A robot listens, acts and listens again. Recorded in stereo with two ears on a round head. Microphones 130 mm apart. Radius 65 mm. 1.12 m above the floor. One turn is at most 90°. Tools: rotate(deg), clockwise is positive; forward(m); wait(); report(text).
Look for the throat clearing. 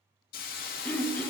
rotate(-30)
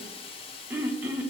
rotate(15)
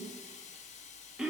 report("Facing the throat clearing.")